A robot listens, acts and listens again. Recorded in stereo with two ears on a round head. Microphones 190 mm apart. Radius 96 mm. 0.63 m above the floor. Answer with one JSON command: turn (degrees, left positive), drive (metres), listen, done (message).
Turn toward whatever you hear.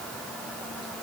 {"listen": true}
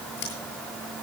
{"turn": 50}
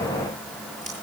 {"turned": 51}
{"listen": true}
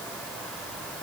{"listen": true}
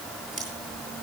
{"done": "Facing the scissors, over 4 m away."}